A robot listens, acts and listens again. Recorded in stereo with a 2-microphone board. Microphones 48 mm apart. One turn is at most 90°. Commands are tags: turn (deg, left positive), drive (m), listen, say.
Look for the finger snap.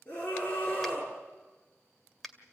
<turn deg="30"/>
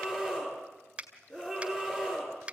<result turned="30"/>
<turn deg="-20"/>
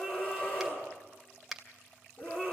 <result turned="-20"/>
<say>Facing the finger snap, 2 to 4 m away.</say>